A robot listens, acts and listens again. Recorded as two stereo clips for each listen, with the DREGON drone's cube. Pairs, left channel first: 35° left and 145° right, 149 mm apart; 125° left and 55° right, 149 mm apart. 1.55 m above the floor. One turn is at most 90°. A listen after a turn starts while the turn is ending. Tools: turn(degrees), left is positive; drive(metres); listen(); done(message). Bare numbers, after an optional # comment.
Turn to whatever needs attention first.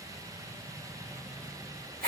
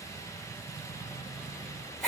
listen()
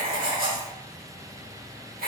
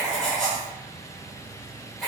listen()
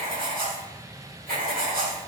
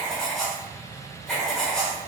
done("I can't make out anything urgent to turn to.")